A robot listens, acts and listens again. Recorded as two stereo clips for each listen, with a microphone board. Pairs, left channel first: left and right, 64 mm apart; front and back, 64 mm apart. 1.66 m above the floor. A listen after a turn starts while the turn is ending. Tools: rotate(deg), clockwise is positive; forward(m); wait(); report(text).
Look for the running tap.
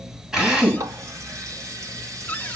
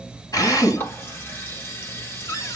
rotate(55)
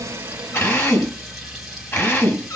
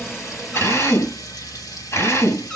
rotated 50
wait()
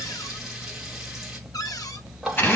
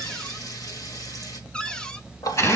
report("Found it: a running tap, straight ahead.")